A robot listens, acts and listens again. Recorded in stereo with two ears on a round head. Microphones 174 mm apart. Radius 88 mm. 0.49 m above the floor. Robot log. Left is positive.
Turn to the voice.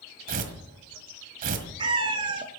cmd idle
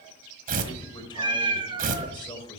note: The man speaking: about 25° left or 155° left.
cmd yaw +25
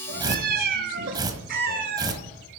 cmd idle
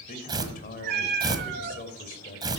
note: So it is at 130° left.
cmd yaw +130
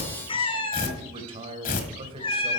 note: The man speaking is now 30° right.
cmd yaw -30
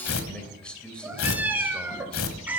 end: Facing the man speaking, 2 to 4 m away.